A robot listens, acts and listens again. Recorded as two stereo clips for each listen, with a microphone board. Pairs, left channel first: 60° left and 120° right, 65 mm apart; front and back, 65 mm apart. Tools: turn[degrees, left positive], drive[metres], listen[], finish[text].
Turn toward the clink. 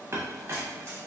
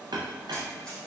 Thought: The clink: 170° right.
Action: turn[-170]
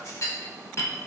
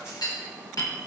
Thought: The clink is now 20° left.
Action: turn[20]
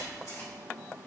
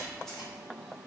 Action: listen[]
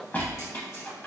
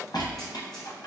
Action: finish[Facing the clink.]